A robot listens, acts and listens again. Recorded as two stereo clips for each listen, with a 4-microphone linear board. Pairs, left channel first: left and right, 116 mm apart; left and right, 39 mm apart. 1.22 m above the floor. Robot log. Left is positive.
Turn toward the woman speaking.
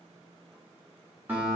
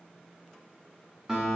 cmd idle
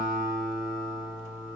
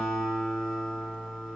cmd idle
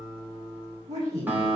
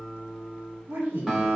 cmd yaw -90
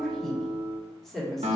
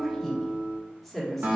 end: Facing the woman speaking.